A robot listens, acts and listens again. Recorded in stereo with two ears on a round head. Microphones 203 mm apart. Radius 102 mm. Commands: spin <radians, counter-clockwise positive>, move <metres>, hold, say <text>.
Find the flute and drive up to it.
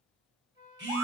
spin -0.35
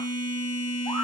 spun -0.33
hold
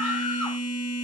hold
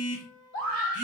spin -2.44
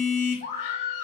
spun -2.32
spin -0.17
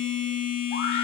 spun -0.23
hold
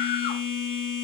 say I heard a flute from this way, but can't make it out now. I did not reach it.